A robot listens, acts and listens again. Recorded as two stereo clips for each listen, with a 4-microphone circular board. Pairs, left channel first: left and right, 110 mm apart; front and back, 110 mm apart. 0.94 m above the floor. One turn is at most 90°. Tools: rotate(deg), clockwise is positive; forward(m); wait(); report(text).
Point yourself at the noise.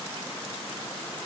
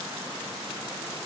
wait()
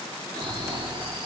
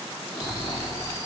rotate(55)
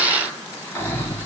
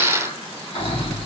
rotate(-20)
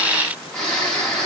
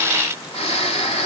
report("Found it: snoring, straight ahead, 2 to 4 m away.")